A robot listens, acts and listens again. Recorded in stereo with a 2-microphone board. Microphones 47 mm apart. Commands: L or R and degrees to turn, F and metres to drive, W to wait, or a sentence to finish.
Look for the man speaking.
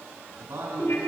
R90
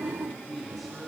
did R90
Found it: a man speaking, straight ahead.